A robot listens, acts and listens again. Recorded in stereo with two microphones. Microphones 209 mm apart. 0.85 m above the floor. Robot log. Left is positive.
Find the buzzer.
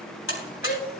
cmd yaw +90
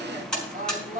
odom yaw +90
end: Facing the buzzer, over 4 m away.